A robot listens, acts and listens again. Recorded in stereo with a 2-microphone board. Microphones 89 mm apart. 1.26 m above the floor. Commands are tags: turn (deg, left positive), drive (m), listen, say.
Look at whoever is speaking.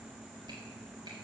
<listen/>
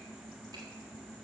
<listen/>
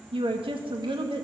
<turn deg="-90"/>
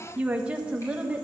<turn deg="-15"/>
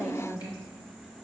<say>Found it: a woman speaking, straight ahead.</say>